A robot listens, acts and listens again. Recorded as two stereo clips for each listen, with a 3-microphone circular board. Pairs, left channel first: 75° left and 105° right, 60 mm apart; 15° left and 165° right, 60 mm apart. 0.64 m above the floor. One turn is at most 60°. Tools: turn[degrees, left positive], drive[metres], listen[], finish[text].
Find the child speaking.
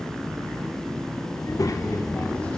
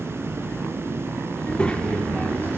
Thought: The child speaking: 85° left.
Action: turn[60]
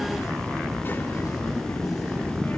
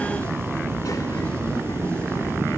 Thought: The child speaking is now 20° left.
Action: turn[20]
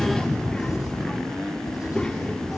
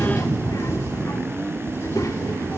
Action: finish[Found it: a child speaking, straight ahead.]